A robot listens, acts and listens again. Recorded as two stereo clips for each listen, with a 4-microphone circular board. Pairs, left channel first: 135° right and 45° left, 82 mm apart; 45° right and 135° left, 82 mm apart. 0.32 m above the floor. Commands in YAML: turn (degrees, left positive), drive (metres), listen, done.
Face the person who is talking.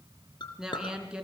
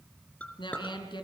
turn: -35
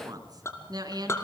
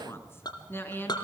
turn: 20
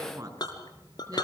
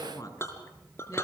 done: "Found it: a woman speaking, straight ahead, 2 to 4 m away."